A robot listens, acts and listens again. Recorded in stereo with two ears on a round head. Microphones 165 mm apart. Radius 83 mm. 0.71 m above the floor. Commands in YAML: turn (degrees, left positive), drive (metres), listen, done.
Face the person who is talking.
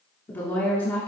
turn: 30
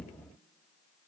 listen: true
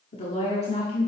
turn: 140
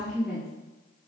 done: "Facing the woman speaking, 1 to 2 m away."